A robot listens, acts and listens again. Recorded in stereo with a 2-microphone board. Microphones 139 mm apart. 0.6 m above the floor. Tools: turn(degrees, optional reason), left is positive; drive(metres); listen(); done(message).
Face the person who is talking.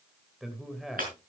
turn(degrees=30)
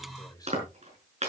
turn(degrees=150, reason="So it is at 150° left.")
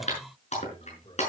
turn(degrees=40, reason="The man speaking is now 40° left.")
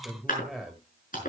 done("Facing the man speaking.")